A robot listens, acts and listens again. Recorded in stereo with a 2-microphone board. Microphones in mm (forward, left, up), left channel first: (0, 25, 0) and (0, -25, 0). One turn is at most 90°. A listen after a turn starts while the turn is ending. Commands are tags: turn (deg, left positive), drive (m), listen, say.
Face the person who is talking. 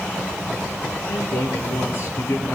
<turn deg="60"/>
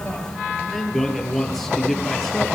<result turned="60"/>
<say>Facing the man speaking, over 4 m away.</say>